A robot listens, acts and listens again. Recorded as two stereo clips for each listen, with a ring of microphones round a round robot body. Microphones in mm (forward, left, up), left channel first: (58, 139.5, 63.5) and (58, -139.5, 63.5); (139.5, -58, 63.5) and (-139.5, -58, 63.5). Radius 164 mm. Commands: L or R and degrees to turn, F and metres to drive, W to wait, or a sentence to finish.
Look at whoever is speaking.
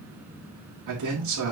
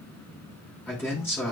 R80
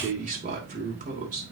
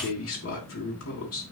R30
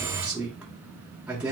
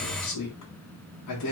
Facing the man speaking, 2 to 4 m away.